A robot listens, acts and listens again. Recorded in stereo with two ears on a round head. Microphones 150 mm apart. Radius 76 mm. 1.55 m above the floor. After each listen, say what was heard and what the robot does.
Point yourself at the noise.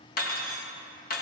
The cutlery clinking: about 55° left or 125° left. Turn 55° left.
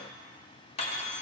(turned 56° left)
So it is at 45° left. Turn 45° left.
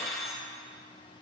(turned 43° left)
Found it: cutlery clinking, straight ahead, 1 to 2 m away.